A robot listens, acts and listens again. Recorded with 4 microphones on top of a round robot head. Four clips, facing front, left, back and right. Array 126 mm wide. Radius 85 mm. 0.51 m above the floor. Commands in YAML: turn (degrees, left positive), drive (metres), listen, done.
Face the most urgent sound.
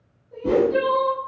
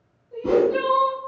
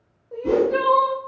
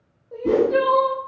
turn: -145
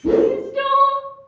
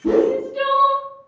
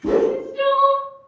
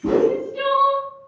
turn: 10
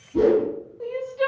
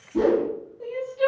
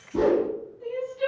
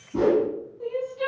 done: "Found it: crying, straight ahead."